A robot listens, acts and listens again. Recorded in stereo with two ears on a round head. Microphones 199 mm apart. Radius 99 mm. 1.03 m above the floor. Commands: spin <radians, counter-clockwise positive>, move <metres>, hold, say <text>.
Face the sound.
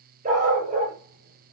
spin -0.61
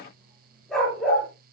say Facing the dog barking.